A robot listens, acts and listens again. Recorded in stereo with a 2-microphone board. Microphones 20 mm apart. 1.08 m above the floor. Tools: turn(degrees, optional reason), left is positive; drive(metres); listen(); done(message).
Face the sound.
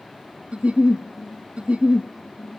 turn(degrees=-90)
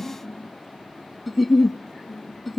done("Facing the giggle, 1 to 2 m away.")